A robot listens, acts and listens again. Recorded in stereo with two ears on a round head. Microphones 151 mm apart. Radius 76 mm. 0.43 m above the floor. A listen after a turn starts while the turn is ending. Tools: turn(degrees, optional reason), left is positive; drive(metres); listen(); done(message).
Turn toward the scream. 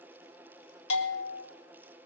listen()
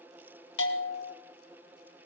listen()
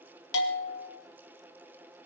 done("I can't make out a scream, only a bell.")